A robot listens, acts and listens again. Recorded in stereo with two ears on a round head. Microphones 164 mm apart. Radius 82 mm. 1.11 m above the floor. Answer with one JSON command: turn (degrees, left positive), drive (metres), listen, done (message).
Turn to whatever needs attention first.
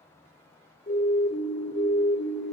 {"turn": 40}
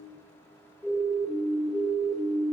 {"done": "Facing the siren, 2 to 4 m away."}